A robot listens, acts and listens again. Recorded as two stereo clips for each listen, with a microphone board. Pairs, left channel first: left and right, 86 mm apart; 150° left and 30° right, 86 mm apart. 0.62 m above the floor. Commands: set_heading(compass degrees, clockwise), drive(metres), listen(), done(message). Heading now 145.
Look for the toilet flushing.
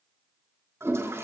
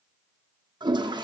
set_heading(180)
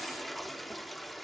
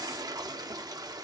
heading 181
done("Facing the toilet flushing.")